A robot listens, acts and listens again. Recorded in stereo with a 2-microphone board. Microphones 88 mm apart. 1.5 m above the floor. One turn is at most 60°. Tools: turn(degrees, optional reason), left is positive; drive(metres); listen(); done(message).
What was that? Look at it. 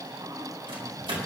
turn(degrees=-60)
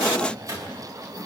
turn(degrees=-40, reason="So it is at 40° right.")
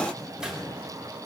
turn(degrees=-10, reason="The microwave is now 10° right.")
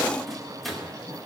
done("Facing the microwave, 2 to 4 m away.")